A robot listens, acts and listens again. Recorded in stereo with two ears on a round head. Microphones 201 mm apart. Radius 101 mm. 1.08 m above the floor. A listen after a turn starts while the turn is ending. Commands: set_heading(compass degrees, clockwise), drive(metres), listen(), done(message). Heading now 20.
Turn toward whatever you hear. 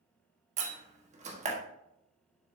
set_heading(50)
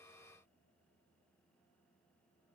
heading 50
listen()
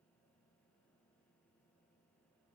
done("I heard a door slam, but can't make it out now. It was about straight ahead or 120° right.")